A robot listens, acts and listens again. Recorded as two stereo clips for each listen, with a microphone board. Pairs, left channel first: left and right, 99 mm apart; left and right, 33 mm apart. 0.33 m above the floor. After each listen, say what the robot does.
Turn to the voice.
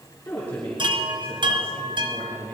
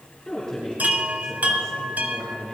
Turn 15° left.
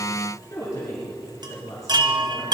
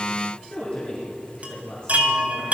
Turn 150° left.
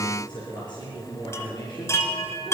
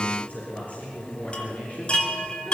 Turn 55° left.
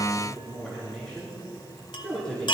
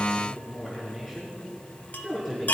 Found it: a woman speaking, straight ahead.